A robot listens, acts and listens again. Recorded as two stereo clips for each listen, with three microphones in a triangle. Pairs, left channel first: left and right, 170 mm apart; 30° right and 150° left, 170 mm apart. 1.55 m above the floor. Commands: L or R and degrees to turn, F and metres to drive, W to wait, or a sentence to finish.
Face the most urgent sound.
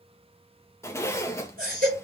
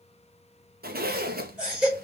R125
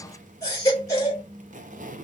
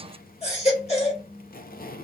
L20
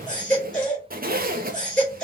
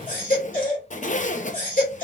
Facing the baby crying.